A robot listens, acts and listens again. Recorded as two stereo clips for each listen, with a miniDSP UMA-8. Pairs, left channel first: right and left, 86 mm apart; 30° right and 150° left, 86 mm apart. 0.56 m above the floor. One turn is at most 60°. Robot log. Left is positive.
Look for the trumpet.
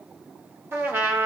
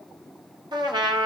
note: The trumpet: 150° left.
cmd yaw +60
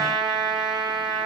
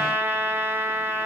note: The trumpet is now 95° left.
cmd yaw +60
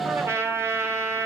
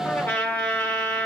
note: The trumpet is now 35° left.
cmd yaw +35
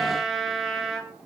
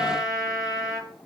end: Found it: a trumpet, straight ahead, 1 to 2 m away.